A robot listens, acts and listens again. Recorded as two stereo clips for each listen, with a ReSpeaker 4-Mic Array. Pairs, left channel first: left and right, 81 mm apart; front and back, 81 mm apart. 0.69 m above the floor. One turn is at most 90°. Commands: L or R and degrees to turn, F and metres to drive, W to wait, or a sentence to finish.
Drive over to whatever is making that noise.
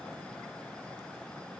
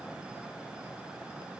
W
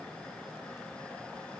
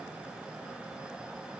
W
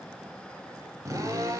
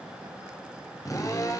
R45
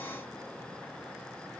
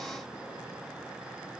W
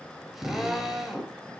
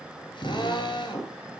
F1.0
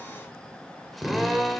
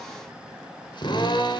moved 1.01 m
F1.0
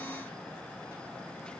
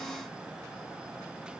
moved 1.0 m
W
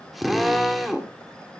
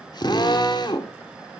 F1.0
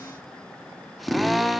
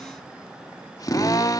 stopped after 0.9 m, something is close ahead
I am next to the drill.